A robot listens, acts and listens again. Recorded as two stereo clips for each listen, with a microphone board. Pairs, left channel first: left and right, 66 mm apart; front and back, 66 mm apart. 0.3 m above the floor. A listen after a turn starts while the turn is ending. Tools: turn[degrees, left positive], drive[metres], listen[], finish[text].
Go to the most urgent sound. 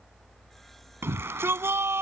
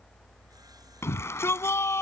Thought: The shout: 40° right.
Action: turn[-40]
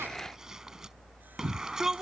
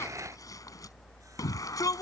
Thought: The shout is now 10° right.
Action: turn[-10]
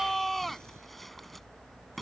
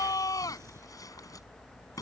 Action: drive[1.0]
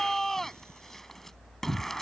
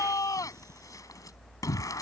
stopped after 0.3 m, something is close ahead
Action: finish[Blocked. The shout is further on, straight ahead.]